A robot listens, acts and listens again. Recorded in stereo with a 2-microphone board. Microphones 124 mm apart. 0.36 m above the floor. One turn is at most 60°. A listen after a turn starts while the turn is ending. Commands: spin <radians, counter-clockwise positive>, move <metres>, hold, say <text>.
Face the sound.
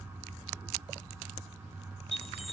spin 0.87
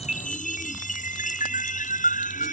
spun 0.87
spin 1.05
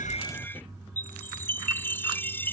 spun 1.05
spin 0.26
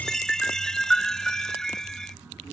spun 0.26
say Found it: a chime, straight ahead.